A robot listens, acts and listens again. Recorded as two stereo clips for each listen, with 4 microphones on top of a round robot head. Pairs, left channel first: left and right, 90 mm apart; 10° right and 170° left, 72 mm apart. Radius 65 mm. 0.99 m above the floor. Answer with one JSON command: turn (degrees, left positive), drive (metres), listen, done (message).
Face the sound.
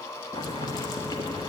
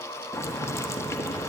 {"turn": 40}
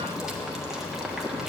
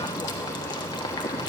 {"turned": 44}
{"done": "Facing the boiling, 1 to 2 m away."}